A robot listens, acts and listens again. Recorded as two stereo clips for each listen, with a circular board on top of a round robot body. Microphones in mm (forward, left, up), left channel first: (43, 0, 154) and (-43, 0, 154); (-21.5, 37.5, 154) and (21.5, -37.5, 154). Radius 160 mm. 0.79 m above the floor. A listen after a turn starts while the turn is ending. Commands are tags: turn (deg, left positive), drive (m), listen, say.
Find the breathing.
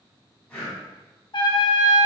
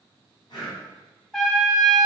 <turn deg="85"/>
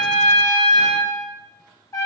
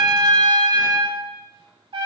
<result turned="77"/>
<listen/>
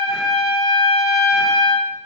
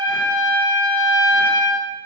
<listen/>
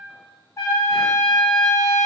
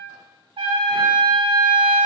<say>Facing where the breathing came from. I can't hear it now.</say>